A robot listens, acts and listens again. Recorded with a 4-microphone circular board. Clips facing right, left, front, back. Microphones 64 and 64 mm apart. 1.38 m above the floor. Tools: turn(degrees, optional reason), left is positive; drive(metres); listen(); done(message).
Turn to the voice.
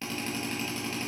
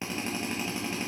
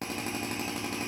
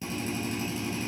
listen()
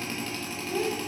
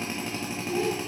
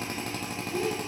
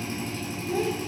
turn(degrees=175, reason="The child speaking: 175° left.")
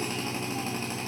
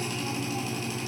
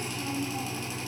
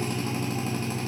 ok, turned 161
turn(degrees=15, reason="Nothing new. It was at 15° left.")
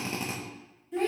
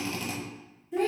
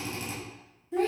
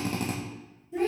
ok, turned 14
done("Facing the child speaking.")